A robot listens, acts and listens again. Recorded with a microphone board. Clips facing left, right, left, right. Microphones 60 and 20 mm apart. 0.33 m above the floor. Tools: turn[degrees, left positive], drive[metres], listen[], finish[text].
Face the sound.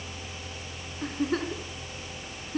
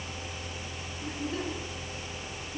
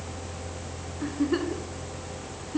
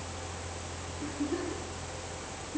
Thought: The giggle: about 65° left or 115° left.
Action: turn[65]
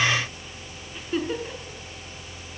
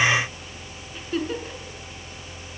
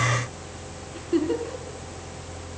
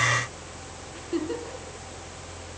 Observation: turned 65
Action: finish[Found it: a giggle, straight ahead.]